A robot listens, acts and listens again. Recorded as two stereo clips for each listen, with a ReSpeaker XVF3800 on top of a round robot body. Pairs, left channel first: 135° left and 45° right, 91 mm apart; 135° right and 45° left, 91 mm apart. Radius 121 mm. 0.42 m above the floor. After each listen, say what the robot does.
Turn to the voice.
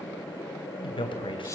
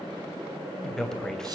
Turn 140° left.
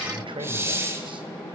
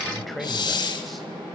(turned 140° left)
Turn 45° right.
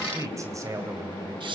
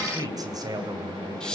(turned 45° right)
Facing the man speaking, 2 to 4 m away.